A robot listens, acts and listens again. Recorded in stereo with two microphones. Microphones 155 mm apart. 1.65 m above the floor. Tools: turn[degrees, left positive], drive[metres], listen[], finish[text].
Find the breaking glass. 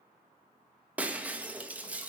Action: turn[-30]
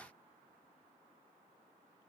Action: listen[]
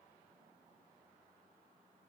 Action: finish[I heard breaking glass, but can't make it out now. It was about 20° left or 140° right.]